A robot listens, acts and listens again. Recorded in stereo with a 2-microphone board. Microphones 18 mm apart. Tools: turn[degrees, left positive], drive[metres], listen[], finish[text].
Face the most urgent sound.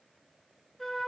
Action: listen[]
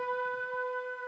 Action: listen[]
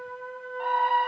Thought: The scream: about 60° right or 120° right.
Action: turn[-60]
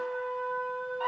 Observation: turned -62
Thought: So it is at 15° right.
Action: turn[-15]
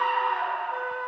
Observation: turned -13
Action: finish[Facing the scream.]